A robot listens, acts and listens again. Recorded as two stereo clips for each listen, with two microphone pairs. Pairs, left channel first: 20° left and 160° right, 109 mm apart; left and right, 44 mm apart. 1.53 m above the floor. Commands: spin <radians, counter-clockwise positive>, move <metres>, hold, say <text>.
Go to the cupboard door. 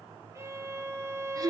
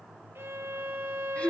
hold
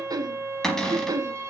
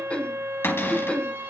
spin 1.83
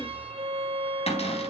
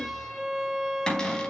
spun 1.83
spin 0.26
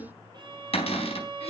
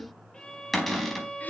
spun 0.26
move 1.0
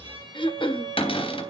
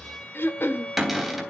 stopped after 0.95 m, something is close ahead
spin -0.17
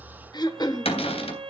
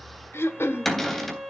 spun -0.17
say Blocked. The cupboard door is further on, straight ahead.